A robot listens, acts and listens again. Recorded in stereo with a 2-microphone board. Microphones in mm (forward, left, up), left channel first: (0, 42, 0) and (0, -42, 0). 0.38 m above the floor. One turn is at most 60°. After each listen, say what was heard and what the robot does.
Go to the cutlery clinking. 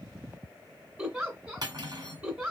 The cutlery clinking: about 50° right or 130° right. Turn 50° right.
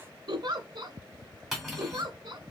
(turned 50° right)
Drive 1.0 m forward.
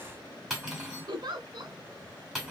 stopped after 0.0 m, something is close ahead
Blocked. The cutlery clinking is further on, straight ahead.